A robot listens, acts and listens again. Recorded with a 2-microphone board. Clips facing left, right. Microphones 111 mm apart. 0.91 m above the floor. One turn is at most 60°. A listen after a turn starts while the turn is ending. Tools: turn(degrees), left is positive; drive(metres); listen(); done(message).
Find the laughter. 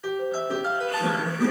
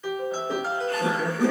turn(degrees=-25)
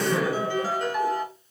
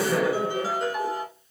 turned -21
done("Found it: laughter, straight ahead.")